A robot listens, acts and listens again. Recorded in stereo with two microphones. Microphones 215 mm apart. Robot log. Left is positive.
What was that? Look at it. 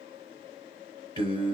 note: The singing: about 25° right or 155° right.
cmd yaw -25
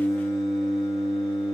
end: Found it: singing, straight ahead.